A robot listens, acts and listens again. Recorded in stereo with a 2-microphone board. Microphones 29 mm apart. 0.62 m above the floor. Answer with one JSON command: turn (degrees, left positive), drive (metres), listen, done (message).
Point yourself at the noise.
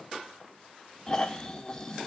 {"turn": 25}
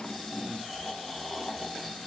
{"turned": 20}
{"done": "Facing the snoring, under 1 m away."}